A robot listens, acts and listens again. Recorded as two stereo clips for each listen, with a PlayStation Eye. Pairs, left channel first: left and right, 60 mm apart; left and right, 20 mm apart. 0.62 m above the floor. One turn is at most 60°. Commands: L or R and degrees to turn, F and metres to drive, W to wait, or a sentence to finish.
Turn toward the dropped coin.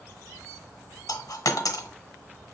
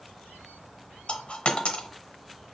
L60
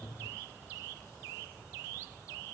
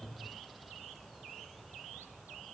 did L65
W
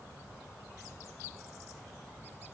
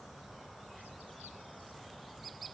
I heard a dropped coin, but can't make it out now. It was about 10° left or 40° left.